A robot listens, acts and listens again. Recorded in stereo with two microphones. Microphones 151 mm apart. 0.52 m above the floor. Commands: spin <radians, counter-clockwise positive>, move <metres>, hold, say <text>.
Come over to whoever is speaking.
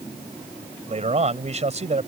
spin -0.79
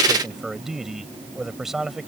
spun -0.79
move 1.0
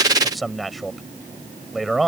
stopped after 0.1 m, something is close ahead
say Something is in my way. I am facing the man speaking but have not reached it.